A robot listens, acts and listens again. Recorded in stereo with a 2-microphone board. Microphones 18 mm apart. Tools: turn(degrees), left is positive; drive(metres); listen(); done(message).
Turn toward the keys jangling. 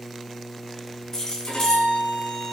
turn(degrees=35)
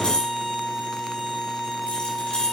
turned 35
turn(degrees=110)
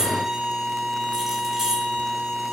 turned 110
turn(degrees=-25)
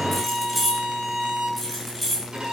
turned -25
done("Found it: keys jangling, straight ahead.")